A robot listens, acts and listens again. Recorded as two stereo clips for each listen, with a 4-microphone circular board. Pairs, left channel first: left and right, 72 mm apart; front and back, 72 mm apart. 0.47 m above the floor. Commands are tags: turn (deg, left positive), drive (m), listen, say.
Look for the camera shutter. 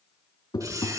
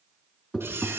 <turn deg="-125"/>
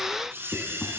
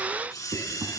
<turn deg="-35"/>
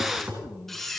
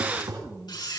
<say>Found it: a camera shutter, straight ahead, over 4 m away.</say>